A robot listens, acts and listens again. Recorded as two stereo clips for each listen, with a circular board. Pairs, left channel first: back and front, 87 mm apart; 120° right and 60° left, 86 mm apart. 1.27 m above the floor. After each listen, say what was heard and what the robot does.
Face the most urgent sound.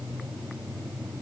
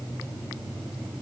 Keep listening.
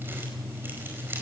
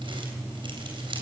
Keep listening.
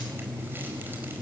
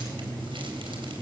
I can't make out anything urgent.